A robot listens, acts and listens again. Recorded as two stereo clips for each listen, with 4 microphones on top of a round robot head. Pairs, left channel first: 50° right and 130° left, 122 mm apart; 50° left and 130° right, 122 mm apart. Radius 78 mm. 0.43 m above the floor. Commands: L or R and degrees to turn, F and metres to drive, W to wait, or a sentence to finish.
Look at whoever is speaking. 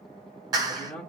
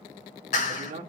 R135
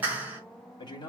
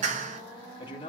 Facing the man speaking, 2 to 4 m away.